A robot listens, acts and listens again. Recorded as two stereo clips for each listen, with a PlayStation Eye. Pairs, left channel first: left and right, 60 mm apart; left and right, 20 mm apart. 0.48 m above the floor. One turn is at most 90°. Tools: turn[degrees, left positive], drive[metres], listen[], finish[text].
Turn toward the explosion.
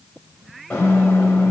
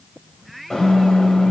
Thought: The explosion: about 40° left or 140° left.
Action: turn[40]
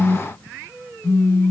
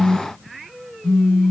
Action: listen[]
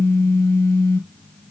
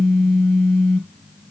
Action: finish[I heard an explosion, but can't make it out now. It was about straight ahead or 100° left.]